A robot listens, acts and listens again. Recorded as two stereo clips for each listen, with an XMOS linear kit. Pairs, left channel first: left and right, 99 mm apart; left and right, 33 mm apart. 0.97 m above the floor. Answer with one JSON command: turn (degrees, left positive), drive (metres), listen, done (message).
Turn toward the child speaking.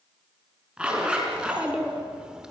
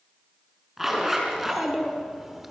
{"turn": -30}
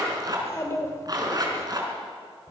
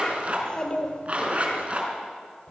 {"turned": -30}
{"turn": 35}
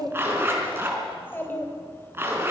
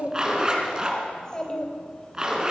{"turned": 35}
{"turn": 20}
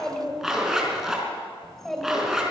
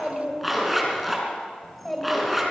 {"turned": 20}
{"done": "Found it: a child speaking, straight ahead, 2 to 4 m away."}